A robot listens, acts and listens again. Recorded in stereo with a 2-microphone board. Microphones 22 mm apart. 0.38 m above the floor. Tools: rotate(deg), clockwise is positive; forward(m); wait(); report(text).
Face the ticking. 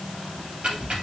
rotate(50)
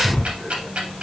rotate(75)
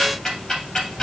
rotate(-25)
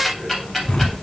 report("Found it: ticking, straight ahead, 2 to 4 m away.")